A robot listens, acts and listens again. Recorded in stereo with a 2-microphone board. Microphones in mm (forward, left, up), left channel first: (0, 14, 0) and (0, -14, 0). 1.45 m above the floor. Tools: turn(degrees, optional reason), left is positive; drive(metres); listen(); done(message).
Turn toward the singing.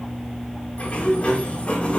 listen()
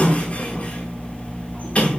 listen()
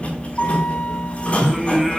turn(degrees=-30)
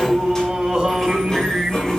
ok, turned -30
turn(degrees=-155, reason="So it is at 155° right.")
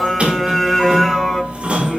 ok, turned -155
done("Found it: singing, straight ahead, over 4 m away.")